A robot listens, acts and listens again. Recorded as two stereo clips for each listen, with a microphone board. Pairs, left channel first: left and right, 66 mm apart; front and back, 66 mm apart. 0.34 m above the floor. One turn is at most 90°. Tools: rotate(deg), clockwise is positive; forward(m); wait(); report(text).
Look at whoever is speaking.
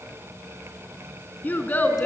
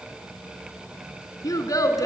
rotate(-30)
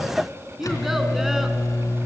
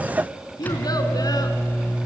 report("Found it: a child speaking, straight ahead.")